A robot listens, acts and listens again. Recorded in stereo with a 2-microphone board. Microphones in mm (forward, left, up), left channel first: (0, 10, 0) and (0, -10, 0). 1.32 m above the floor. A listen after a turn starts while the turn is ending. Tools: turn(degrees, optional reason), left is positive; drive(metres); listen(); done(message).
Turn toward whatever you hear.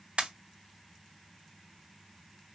turn(degrees=-70, reason="The pop: about 70° right or 110° right.")
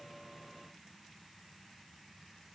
listen()
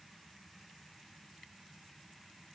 done("I heard a pop, but can't make it out now. It was about straight ahead or 40° right.")